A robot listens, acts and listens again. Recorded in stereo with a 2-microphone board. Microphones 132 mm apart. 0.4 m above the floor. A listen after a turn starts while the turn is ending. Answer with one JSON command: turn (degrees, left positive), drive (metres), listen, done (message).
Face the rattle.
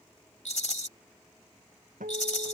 {"turn": 65}
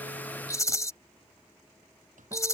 {"turn": 25}
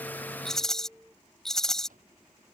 {"done": "Found it: a rattle, straight ahead."}